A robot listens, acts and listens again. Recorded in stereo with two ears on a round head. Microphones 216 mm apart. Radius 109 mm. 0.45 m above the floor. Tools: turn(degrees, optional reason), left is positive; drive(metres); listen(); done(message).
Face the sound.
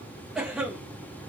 turn(degrees=30)
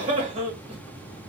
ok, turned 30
turn(degrees=-30, reason="So it is at 30° right.")
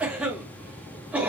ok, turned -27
done("Found it: a cough, straight ahead.")